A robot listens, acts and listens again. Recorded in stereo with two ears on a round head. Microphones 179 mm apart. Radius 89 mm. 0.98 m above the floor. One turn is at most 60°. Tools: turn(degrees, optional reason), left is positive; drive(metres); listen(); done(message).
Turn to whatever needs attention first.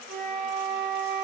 listen()
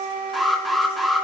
turn(degrees=30)
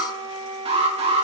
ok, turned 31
turn(degrees=-30, reason="So it is at 30° right.")
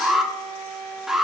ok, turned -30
done("Facing the alarm.")